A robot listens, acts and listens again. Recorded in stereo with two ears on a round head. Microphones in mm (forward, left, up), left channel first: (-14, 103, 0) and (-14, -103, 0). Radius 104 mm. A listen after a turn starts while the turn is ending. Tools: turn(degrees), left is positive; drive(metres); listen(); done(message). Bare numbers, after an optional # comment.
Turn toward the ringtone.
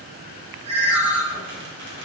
# The ringtone: about 45° right or 135° right.
turn(-45)
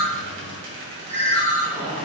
# So it is at 10° right.
turn(-10)
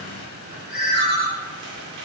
done("Facing the ringtone.")